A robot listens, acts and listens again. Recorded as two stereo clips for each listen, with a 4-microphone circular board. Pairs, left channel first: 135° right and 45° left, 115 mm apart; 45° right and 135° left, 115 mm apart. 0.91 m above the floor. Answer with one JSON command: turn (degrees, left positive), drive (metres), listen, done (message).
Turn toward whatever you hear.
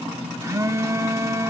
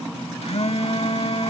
{"turn": -15}
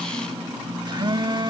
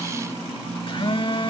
{"done": "Facing the phone buzzing."}